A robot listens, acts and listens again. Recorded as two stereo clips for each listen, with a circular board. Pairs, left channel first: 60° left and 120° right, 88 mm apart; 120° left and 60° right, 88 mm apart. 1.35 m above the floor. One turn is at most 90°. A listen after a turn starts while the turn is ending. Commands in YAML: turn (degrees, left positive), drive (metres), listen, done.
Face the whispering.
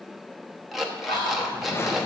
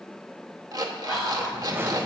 turn: 35
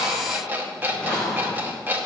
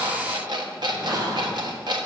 listen: true
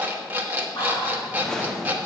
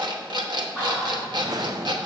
turn: 10
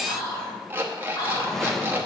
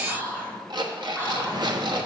done: "Found it: whispering, straight ahead, 2 to 4 m away."